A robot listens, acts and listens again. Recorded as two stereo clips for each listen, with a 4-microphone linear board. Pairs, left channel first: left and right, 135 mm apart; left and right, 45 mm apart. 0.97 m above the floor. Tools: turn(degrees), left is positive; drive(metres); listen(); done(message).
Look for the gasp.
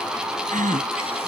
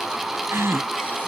turn(degrees=-70)
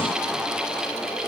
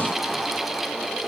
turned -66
listen()
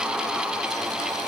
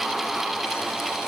done("I heard a gasp, but can't make it out now. It was about 5° right or 45° right.")